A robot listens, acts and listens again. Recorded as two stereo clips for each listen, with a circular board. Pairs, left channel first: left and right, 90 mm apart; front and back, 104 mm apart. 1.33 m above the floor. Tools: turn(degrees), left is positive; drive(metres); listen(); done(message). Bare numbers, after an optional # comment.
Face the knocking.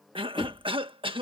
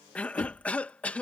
# The knocking: 50° left.
turn(50)
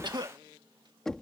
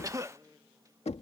done("Facing the knocking.")